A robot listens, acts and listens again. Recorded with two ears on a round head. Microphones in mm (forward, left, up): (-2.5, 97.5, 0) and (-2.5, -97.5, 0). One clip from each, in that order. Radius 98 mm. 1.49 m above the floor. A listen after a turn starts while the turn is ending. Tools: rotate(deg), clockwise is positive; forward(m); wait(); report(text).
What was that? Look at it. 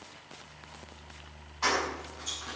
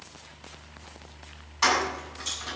rotate(65)
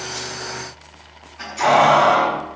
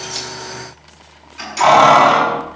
rotate(50)
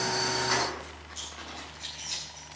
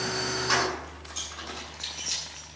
rotate(20)
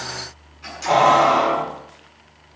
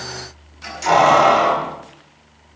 report("Facing the keys jangling, over 4 m away.")